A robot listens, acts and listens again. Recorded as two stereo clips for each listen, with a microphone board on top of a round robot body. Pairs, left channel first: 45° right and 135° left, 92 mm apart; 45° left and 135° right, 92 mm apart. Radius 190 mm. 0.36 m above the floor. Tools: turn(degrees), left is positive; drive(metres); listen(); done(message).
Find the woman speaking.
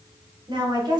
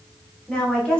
turn(degrees=120)
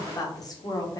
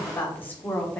turn(degrees=-25)
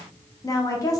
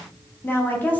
turn(degrees=-20)
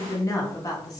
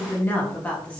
turn(degrees=-25)
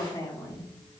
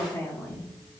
turn(degrees=-20)
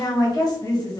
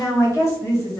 turn(degrees=-10)
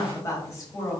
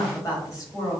done("Facing the woman speaking, 1 to 2 m away.")